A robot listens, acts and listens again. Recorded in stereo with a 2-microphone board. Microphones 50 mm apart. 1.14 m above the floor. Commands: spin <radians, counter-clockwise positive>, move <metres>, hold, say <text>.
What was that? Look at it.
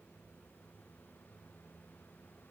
hold
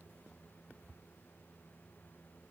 hold
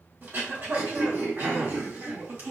spin -0.70
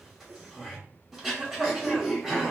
say Facing the throat clearing, 1 to 2 m away.